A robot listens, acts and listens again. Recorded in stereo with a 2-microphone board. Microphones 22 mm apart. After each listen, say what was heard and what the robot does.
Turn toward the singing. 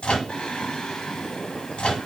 The singing: about 40° left or 140° left. Turn 40° left.
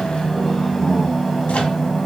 So it is at 10° left. Turn 10° left.
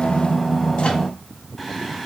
Facing the singing, 1 to 2 m away.